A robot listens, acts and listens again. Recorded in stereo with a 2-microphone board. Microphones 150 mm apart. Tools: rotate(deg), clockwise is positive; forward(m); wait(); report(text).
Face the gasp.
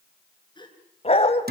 rotate(-30)
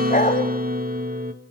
wait()
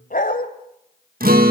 report("I heard a gasp, but can't make it out now. It was about straight ahead or 120° left.")